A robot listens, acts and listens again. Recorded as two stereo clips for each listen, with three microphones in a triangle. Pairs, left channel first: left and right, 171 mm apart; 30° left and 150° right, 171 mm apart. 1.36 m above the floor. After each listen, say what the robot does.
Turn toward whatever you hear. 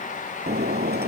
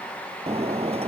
Turn 100° right.
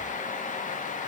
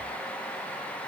Facing where the breaking glass came from. I can't hear it now.